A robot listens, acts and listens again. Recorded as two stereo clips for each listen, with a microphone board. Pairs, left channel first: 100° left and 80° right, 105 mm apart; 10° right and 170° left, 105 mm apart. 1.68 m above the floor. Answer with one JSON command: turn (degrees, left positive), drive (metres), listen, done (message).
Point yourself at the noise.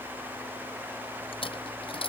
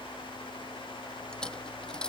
{"turn": 70}
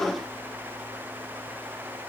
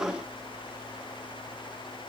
{"done": "I heard a dropped coin from this way, but can't make it out now."}